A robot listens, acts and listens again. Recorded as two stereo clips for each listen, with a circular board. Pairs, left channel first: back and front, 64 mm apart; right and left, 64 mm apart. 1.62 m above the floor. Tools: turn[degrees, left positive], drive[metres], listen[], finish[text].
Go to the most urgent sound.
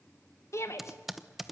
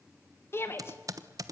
Thought: The shout: 140° right.
Action: turn[-140]
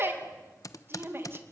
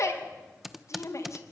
Thought: The shout is now 50° right.
Action: turn[-50]
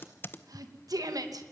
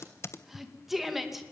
Action: drive[1.0]
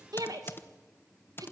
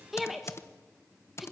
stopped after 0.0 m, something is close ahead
Action: finish[Blocked. The shout is further on, straight ahead.]